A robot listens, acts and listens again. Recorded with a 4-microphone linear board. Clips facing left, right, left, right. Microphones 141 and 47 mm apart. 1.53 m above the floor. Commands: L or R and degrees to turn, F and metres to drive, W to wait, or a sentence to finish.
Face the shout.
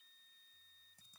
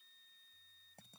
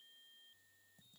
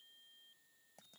W
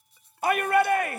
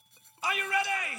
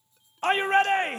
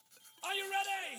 L60
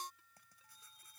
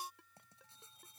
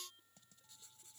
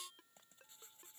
W
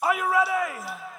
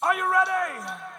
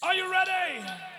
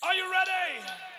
Found it: a shout, straight ahead.